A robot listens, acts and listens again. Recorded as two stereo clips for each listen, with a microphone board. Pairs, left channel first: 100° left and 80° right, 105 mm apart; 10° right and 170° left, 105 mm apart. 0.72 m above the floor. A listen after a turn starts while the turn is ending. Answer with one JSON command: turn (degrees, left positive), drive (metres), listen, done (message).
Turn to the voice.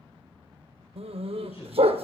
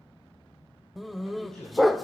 {"turn": 75}
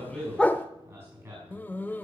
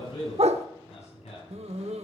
{"turn": -15}
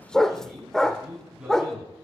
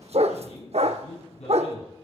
{"done": "Facing the man speaking."}